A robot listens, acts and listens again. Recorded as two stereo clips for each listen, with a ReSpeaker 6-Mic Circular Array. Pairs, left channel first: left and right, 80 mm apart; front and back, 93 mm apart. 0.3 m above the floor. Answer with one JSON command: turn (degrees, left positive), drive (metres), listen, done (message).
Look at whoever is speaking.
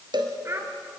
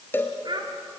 {"turn": -145}
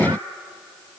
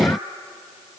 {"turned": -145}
{"listen": true}
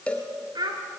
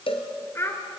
{"turn": -60}
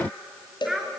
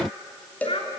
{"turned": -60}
{"done": "Facing the child speaking."}